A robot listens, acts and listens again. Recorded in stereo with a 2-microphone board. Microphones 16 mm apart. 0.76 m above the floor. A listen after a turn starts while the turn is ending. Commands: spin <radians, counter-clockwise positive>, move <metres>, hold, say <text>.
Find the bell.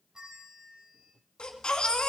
spin -0.79
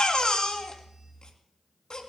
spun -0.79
hold
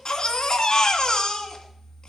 hold
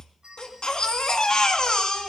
spin -1.48
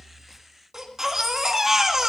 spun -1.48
hold
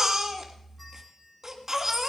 hold
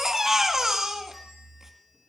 say I heard a bell from this way, but can't make it out now.